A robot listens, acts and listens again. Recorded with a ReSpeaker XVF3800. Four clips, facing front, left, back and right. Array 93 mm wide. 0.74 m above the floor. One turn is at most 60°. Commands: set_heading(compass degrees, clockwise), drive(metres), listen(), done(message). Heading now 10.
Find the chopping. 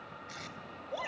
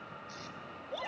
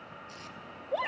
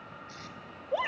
listen()
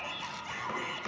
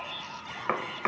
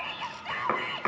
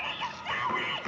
set_heading(310)
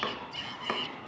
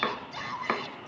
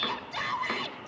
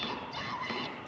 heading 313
set_heading(253)
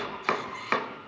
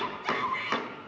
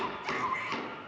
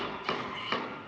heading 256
set_heading(241)
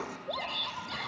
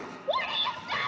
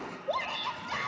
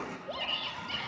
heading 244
listen()
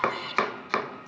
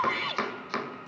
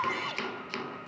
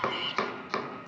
done("Found it: chopping, straight ahead, 2 to 4 m away.")